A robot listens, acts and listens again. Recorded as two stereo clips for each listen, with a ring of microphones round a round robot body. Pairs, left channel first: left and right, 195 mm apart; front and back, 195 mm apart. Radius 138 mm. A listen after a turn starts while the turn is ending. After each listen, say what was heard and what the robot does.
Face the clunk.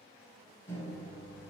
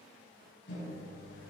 Keep listening.
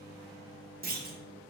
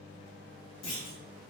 The clunk: 45° right. Turn 45° right.
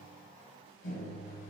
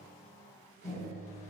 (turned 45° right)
I heard a clunk from this way, but can't make it out now.